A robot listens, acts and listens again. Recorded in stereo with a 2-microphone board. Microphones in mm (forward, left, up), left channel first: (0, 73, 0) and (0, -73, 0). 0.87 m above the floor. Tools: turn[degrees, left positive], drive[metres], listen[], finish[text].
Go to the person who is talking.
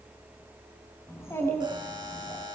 Thought: The child speaking: about 20° left or 160° left.
Action: turn[20]
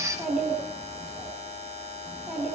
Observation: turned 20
Action: drive[1.0]
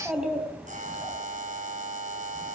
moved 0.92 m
Action: drive[1.0]
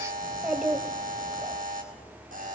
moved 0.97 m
Action: drive[1.0]
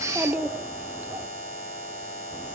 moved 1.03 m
Thought: The child speaking is now 10° right.
Action: turn[-10]
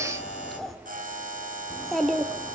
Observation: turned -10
Action: drive[1.0]
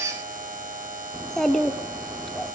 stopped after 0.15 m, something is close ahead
Action: finish[I am next to the child speaking.]